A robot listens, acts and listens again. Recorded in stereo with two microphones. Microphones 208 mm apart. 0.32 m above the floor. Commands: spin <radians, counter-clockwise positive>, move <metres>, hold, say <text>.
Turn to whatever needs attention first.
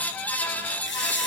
hold
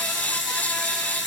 hold
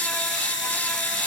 say I can't make out anything urgent to turn to.